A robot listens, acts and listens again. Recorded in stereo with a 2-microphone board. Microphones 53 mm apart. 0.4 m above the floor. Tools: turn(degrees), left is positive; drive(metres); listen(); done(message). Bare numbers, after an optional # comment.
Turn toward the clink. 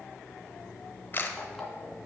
listen()
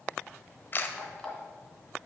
listen()
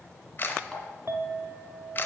# The clink: about 55° right or 125° right.
turn(-55)
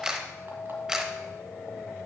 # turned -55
# So it is at 25° right.
turn(-25)
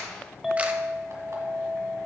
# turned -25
# The clink is now 10° right.
turn(-10)
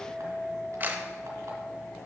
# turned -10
done("Found it: a clink, straight ahead.")